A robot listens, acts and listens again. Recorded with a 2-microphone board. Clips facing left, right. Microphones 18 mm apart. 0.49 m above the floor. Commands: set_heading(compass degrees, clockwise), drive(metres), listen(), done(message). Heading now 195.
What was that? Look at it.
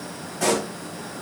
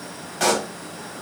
set_heading(265)
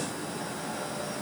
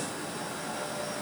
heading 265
listen()
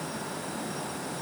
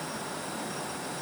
done("I heard a pop, but can't make it out now. It was about straight ahead or 40° right.")